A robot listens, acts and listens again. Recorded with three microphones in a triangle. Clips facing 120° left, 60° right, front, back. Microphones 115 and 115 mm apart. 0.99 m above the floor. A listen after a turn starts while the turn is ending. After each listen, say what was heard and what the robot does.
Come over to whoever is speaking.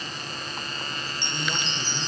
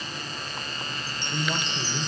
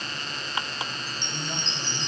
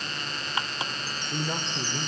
The man speaking: 135° right. Turn 135° right.
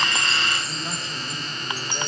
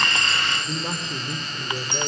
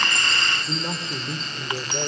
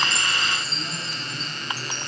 Drive 1.0 m forward.
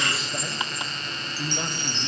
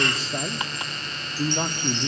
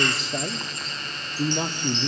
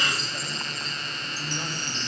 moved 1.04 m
Drive 1.0 m forward.
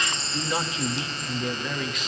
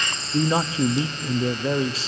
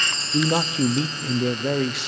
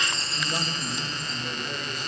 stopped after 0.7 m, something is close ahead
Arrived at the man speaking, straight ahead.